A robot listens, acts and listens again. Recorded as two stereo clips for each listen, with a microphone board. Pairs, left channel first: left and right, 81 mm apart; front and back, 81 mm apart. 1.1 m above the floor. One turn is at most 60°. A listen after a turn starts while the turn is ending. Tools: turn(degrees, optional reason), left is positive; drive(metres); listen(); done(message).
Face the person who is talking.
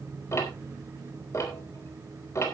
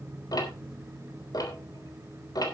listen()
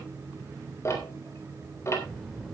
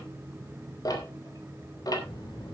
done("Found it: a child speaking, straight ahead, 2 to 4 m away.")